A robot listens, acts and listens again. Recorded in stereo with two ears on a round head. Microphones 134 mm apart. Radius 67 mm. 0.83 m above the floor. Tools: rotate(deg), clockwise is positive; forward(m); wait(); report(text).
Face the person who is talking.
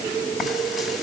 wait()
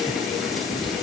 wait()
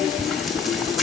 report("I can't make out anyone speaking to turn to.")